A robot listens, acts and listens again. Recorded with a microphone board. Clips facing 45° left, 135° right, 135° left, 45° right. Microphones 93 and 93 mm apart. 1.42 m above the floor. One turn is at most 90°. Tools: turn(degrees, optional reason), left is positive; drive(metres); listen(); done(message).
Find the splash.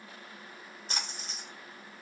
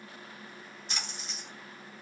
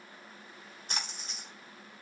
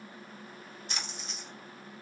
turn(degrees=90, reason="The splash: 90° left.")
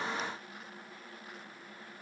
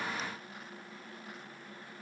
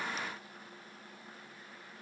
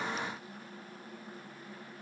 done("Facing where the splash came from. I can't hear it now.")